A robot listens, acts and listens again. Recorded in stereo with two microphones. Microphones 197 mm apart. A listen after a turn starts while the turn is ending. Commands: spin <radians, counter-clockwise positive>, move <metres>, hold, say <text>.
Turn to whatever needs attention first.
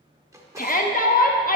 spin 0.79
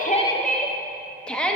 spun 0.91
say Found it: a shout, straight ahead.